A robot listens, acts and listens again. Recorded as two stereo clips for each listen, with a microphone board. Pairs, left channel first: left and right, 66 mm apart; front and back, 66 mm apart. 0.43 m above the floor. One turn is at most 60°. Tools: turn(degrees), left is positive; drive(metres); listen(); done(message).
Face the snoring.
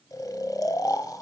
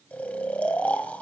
turn(degrees=60)
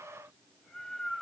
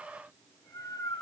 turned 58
turn(degrees=10)
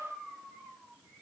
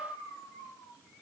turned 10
done("Found it: snoring, straight ahead.")